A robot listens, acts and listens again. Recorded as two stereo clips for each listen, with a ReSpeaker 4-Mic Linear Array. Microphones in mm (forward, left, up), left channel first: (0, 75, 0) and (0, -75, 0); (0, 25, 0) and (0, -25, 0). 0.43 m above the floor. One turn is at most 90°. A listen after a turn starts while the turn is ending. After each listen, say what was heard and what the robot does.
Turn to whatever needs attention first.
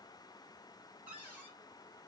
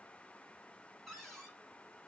Keep listening.
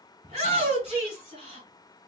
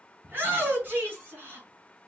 The shout: about 45° right or 135° right. Turn 45° right.
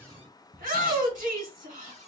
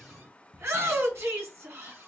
So it is at 85° right. Turn 85° right.
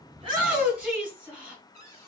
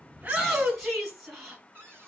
The shout is now 10° right. Turn 10° right.
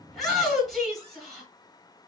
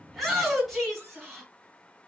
Facing the shout, 1 to 2 m away.